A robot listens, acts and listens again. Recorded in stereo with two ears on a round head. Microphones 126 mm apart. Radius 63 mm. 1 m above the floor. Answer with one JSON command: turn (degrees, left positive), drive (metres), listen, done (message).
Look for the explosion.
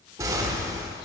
{"turn": -25}
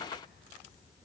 {"listen": true}
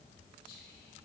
{"done": "I heard an explosion, but can't make it out now. It was about straight ahead or 130° right."}